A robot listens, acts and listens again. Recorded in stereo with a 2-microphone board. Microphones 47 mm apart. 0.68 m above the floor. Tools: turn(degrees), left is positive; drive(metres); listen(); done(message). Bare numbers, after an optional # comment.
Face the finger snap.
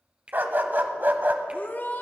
# The finger snap: about 25° right or 155° right.
turn(-25)
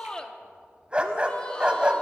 listen()
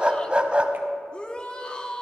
listen()
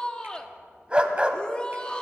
done("I heard a finger snap, but can't make it out now. It was about straight ahead or 130° right.")